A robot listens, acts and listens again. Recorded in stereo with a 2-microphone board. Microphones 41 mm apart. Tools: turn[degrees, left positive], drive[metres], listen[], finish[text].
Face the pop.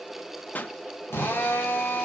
Thought: The pop: about 40° left or 140° left.
Action: turn[40]
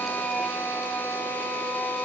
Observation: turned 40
Action: listen[]
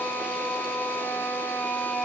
Action: finish[I heard a pop, but can't make it out now. It was about straight ahead or 100° left.]